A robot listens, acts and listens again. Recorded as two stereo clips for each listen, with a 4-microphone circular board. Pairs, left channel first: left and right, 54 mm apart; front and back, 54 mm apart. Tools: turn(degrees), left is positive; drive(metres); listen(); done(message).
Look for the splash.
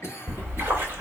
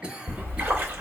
turn(degrees=-140)
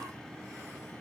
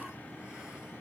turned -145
done("I heard a splash from this way, but can't make it out now.")